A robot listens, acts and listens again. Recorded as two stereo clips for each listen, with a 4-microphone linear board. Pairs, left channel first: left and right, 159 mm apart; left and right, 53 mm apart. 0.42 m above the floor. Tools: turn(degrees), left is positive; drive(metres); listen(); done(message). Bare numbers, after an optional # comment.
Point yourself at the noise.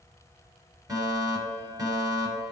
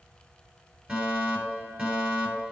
# The fire alarm: about 25° right or 155° right.
turn(-25)
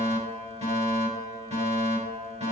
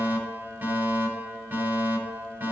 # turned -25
# So it is at 125° right.
turn(-125)
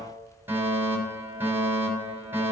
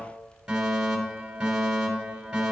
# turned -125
# The fire alarm is now 15° right.
turn(-15)
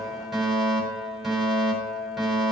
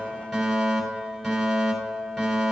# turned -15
done("Facing the fire alarm.")